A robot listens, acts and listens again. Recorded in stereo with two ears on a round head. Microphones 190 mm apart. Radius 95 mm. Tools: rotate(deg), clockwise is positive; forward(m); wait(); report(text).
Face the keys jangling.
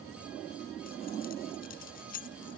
rotate(-45)
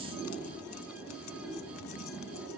wait()
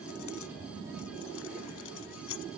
rotate(-105)
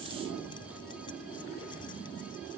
wait()
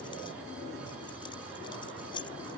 rotate(-25)
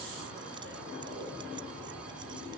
wait()
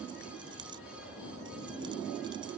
rotate(20)
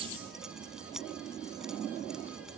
report("Found it: keys jangling, straight ahead.")